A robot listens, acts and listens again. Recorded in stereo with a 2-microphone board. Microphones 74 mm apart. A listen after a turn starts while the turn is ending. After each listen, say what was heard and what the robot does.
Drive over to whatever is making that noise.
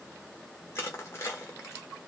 The crushing: about 35° left or 145° left. Turn 35° left.
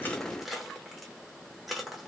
Drive 1.0 m forward.
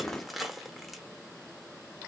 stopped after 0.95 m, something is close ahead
Arrived at the crushing, straight ahead.